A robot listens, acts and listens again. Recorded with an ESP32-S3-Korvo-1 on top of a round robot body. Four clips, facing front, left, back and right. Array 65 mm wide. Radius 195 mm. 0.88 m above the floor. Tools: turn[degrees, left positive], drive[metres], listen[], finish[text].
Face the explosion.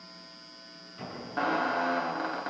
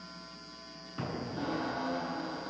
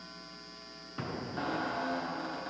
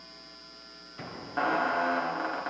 Thought: The explosion: 150° left.
Action: turn[150]
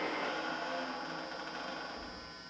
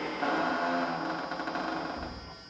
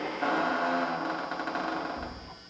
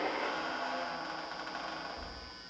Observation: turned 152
Action: finish[Facing where the explosion came from. I can't hear it now.]